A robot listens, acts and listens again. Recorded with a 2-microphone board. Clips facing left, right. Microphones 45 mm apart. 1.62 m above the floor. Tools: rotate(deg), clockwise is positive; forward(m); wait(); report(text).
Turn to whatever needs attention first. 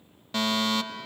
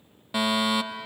rotate(30)
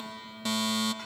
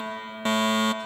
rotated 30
rotate(140)
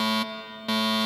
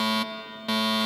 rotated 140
report("Facing the fire alarm.")